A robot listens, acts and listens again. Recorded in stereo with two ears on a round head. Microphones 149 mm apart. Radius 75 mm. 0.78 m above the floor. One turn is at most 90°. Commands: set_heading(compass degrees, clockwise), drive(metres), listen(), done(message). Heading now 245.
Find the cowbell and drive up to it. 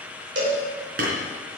set_heading(320)
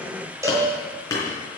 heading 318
set_heading(338)
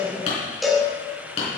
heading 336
drive(1.0)
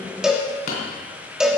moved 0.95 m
drive(1.0)
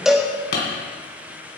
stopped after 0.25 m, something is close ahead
done("I am next to the cowbell.")